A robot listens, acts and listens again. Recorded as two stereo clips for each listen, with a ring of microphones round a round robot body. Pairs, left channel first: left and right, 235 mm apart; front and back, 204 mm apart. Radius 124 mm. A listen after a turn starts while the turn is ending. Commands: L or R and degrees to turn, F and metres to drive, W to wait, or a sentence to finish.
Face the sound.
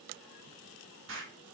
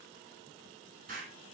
R125
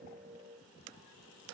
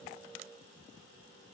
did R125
I heard an explosion from this way, but can't make it out now.